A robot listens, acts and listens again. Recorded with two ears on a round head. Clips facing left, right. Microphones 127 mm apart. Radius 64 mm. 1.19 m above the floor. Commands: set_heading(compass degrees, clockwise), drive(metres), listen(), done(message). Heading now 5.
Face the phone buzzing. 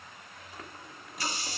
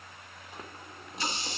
listen()
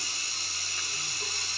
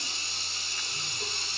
listen()
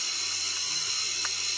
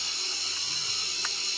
done("I can't make out a phone buzzing to turn to.")